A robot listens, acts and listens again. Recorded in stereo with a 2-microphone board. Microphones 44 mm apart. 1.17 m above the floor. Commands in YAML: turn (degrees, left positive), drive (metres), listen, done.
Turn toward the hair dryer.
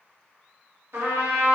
listen: true
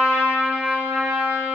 listen: true
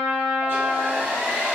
turn: -65
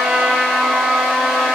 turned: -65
listen: true
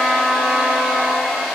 done: "Found it: a hair dryer, straight ahead, 1 to 2 m away."